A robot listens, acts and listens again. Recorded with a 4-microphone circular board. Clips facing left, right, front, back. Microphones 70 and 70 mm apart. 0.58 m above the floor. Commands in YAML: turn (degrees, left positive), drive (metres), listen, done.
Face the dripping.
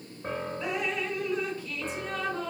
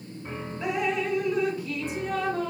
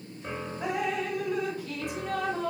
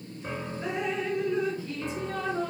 turn: -20
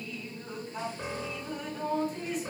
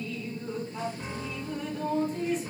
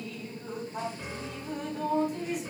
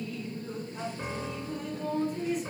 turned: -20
done: "Facing the dripping, 2 to 4 m away."